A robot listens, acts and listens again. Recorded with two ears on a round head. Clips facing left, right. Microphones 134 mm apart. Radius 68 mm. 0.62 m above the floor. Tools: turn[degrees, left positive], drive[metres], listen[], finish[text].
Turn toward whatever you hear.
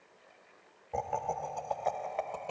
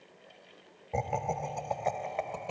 Action: turn[30]
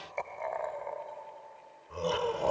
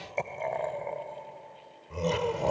Action: turn[-30]
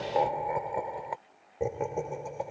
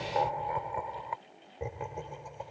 Thought: So it is at 55° left.
Action: turn[55]
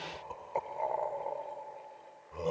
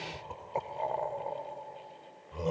Action: finish[Facing the laughter.]